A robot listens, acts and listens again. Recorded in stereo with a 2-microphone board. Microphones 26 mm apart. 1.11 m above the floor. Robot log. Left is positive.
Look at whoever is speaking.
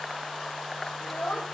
note: The child speaking: about 50° left or 130° left.
cmd yaw +50
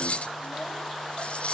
cmd idle
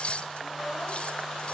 cmd idle
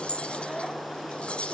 end: I heard a child speaking, but can't make it out now. It was about straight ahead or 80° left.